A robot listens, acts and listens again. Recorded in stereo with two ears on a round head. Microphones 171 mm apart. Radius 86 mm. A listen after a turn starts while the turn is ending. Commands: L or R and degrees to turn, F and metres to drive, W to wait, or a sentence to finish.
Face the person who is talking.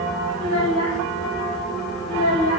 L90
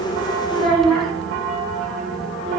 Found it: a child speaking, straight ahead, 2 to 4 m away.